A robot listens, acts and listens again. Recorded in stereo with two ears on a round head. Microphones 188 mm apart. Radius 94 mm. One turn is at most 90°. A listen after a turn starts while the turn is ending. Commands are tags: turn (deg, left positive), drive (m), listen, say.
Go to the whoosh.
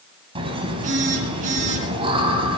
<listen/>
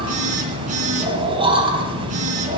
<listen/>
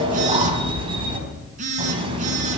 <say>I can't make out a whoosh, only a phone buzzing and laughter.</say>